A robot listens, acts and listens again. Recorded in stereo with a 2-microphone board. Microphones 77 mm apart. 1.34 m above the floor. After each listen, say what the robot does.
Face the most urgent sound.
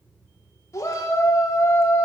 Turn 40° left.
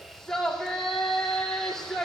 Found it: a shout, straight ahead.